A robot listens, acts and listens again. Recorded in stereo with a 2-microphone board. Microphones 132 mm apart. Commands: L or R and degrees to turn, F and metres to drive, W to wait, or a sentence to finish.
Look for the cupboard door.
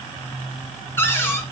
L20
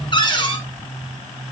L140
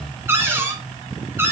R20
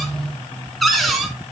Facing the cupboard door, 2 to 4 m away.